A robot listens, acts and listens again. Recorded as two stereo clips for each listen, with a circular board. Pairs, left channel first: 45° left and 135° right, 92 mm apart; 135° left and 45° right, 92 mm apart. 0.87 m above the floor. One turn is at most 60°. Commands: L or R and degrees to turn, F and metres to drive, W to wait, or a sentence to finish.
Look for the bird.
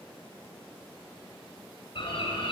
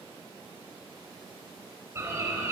L15
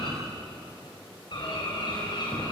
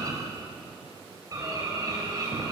Facing the bird.